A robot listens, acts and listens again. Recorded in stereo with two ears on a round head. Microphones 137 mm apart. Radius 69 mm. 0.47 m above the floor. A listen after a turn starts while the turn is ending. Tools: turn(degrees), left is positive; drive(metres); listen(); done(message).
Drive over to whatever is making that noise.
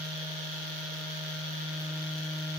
listen()
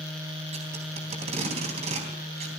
turn(degrees=-45)
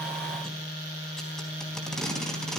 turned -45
drive(metres=1.0)
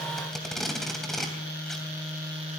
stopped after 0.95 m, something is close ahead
done("Blocked. The tape being pulled is further on, straight ahead.")